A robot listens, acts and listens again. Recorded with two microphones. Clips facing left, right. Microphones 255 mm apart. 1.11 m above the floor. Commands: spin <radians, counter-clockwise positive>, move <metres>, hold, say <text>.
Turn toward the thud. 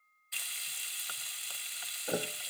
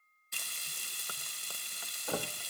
spin 0.35
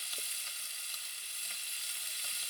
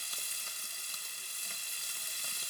hold
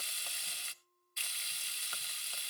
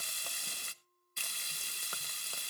say I heard a thud, but can't make it out now. It was about straight ahead or 140° left.